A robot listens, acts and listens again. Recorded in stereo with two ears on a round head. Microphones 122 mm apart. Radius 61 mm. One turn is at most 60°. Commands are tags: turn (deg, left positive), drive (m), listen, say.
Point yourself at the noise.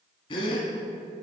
<turn deg="40"/>
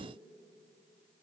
<listen/>
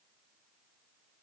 <say>I heard a gasp, but can't make it out now. It was about straight ahead or 100° left.</say>